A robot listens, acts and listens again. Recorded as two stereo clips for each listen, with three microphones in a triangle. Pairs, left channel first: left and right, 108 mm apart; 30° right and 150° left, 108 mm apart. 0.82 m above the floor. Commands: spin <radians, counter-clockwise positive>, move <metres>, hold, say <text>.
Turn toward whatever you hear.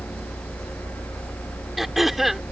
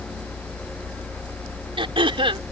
spin 3.14
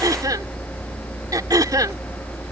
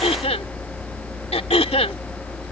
spin -0.61
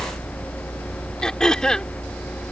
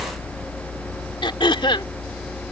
say Facing the throat clearing.